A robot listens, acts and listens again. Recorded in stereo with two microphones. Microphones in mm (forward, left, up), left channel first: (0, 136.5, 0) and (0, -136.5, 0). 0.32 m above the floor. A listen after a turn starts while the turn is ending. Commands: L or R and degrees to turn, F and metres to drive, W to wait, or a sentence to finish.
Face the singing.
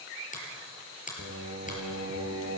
R70
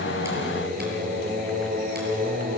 R35
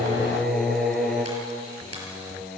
Facing the singing, 2 to 4 m away.